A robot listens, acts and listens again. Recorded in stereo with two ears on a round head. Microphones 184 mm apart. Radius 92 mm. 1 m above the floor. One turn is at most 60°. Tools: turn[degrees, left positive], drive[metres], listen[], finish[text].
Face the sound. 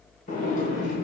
Thought: The sliding door: about 40° left or 140° left.
Action: turn[40]
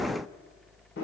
Thought: So it is at 90° left.
Action: turn[60]
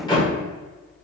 Thought: The sliding door is now 25° left.
Action: turn[25]
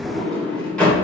Action: finish[Found it: a sliding door, straight ahead, 1 to 2 m away.]